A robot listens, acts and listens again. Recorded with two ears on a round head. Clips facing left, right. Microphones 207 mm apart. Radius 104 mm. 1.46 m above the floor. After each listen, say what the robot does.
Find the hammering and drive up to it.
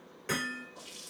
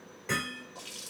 Turn 15° left.
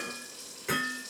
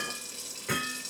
Turn 150° left.
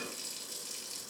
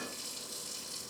Keep listening.
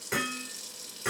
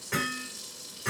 Turn 55° left.
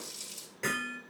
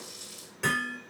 Turn 10° right.
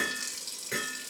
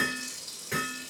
Drive 1.0 m forward.
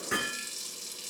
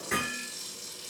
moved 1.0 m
Drive 1.0 m forward.
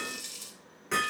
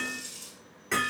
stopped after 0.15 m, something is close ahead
Blocked. The hammering is further on, straight ahead.